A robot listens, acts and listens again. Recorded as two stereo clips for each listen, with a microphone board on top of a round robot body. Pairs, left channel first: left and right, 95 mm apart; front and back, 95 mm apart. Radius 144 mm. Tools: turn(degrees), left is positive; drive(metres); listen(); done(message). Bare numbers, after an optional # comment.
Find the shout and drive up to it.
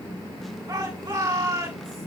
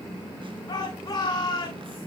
# The shout: 45° right.
turn(-45)
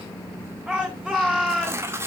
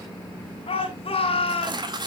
# The shout is now 10° right.
turn(-10)
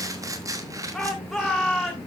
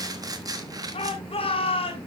drive(1.0)
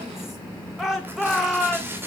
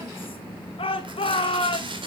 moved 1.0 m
drive(1.0)
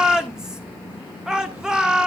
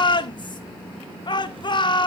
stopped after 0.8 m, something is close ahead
# The shout is now 10° right.
turn(-10)
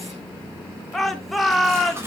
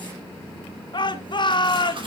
done("I am next to the shout.")